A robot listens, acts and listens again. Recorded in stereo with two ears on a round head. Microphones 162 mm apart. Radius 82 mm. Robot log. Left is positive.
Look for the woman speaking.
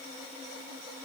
cmd idle
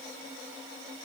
cmd idle
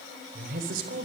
note: The woman speaking: about 55° right or 125° right.
cmd yaw -55
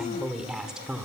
end: Found it: a woman speaking, straight ahead, 2 to 4 m away.